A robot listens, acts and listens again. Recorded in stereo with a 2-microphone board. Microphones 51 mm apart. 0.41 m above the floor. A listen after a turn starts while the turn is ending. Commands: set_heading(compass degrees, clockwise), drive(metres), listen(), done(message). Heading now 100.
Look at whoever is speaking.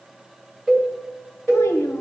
set_heading(30)
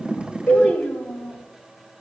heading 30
set_heading(355)
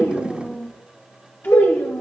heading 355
set_heading(310)
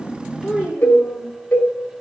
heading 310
done("Found it: a child speaking, straight ahead.")